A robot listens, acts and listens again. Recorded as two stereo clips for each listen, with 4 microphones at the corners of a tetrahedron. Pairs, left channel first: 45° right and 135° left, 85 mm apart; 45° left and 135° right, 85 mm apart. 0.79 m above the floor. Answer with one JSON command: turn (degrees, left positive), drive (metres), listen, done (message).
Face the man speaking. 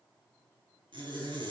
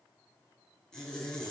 {"listen": true}
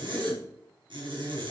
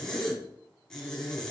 {"listen": true}
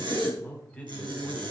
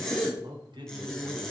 {"turn": -120}
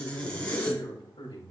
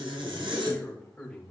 {"turn": -35}
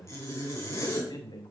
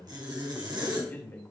{"turn": -15}
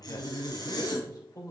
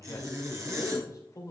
{"done": "Facing the man speaking."}